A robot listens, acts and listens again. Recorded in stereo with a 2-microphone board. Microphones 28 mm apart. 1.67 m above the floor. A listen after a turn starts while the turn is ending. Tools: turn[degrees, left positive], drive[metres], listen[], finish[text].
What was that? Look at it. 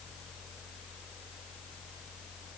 Action: listen[]
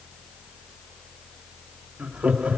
Thought: The laughter: about 55° right or 125° right.
Action: turn[-55]
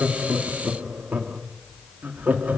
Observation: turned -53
Thought: So it is at 80° right.
Action: turn[-80]
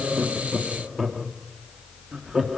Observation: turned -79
Thought: The laughter is now 15° right.
Action: turn[-15]
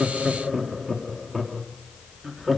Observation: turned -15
Action: finish[Facing the laughter.]